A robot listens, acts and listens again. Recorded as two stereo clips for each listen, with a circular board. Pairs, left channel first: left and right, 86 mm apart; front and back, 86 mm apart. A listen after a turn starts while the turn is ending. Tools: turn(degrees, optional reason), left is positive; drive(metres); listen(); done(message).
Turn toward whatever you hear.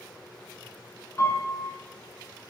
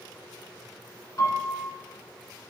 turn(degrees=40, reason="The piano: 40° left.")
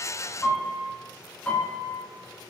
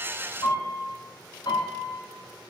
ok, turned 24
turn(degrees=20, reason="The piano is now 20° left.")
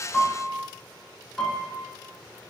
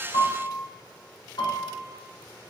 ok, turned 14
done("Facing the piano, 1 to 2 m away.")